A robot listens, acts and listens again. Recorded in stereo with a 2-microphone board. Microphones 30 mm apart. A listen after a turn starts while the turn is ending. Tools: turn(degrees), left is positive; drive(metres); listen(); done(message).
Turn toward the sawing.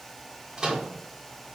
listen()
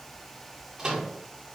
listen()
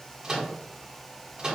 done("I can't make out sawing, only a microwave.")